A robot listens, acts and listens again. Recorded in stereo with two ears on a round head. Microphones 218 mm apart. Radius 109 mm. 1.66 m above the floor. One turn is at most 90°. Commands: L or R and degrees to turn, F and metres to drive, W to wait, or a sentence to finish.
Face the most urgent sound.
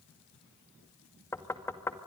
W
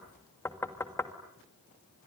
W
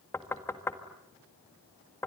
I can't make out anything urgent to turn to.